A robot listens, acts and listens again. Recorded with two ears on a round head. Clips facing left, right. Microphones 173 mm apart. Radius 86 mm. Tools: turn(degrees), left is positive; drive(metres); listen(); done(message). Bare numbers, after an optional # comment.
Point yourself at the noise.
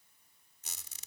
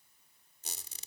# The squeak: about 30° right or 150° right.
turn(-30)
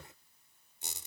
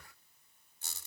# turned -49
# So it is at 20° left.
turn(20)
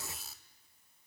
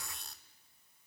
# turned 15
done("Found it: a squeak, straight ahead.")